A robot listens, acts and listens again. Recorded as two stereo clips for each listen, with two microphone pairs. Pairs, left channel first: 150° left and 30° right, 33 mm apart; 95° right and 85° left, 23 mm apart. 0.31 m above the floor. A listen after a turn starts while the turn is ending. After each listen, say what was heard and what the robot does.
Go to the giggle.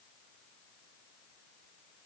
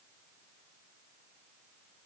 Keep listening.
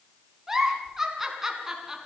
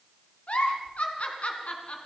The giggle: 105° right. Turn 105° right.
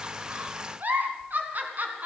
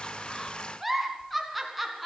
Drive 1.0 m forward.
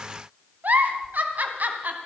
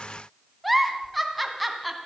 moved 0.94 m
Drive 1.0 m forward.
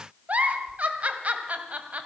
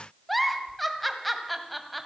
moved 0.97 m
The giggle is now 10° right. Turn 10° right.
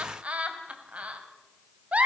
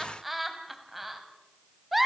Drive 1.0 m forward.
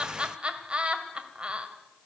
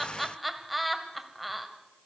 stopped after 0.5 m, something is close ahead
Arrived at the giggle, straight ahead.